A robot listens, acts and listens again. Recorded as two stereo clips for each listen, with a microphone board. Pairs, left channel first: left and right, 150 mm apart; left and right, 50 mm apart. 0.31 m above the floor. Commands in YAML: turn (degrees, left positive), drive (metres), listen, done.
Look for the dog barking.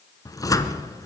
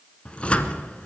listen: true
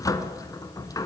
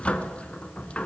listen: true
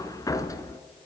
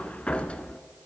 done: "I can't make out a dog barking, only a cupboard door."